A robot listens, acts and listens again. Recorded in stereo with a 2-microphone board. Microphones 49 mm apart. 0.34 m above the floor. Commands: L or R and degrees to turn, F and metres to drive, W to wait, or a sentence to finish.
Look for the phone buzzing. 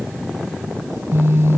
R60
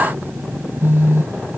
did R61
R55
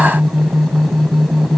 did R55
Found it: a phone buzzing, straight ahead.